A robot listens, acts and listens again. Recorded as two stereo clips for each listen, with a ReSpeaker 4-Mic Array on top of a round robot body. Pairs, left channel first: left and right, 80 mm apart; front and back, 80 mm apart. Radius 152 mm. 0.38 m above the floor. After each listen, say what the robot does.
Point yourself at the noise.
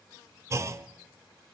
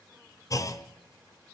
Turn 40° right.
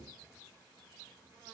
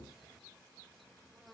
I heard a clunk from this way, but can't make it out now.